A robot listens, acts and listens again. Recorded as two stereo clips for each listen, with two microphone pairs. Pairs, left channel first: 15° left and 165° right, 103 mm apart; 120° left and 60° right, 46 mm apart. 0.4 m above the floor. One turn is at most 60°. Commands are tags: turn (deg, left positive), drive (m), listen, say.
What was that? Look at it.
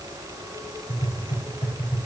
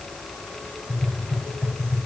<turn deg="30"/>
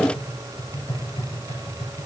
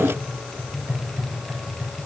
<turn deg="-10"/>
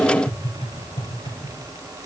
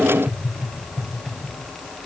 <say>Found it: tapping, straight ahead.</say>